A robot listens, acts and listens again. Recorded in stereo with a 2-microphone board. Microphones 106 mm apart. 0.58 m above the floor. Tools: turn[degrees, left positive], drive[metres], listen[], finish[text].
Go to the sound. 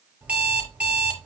Action: turn[-30]
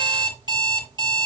Thought: So it is at 140° right.
Action: turn[-140]
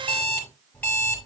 Thought: The alarm clock is now 15° left.
Action: turn[15]
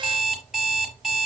Action: drive[1.0]
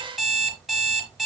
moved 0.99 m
Action: drive[1.0]
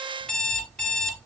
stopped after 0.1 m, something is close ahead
Action: finish[Something is in my way. I am facing the alarm clock but have not reached it.]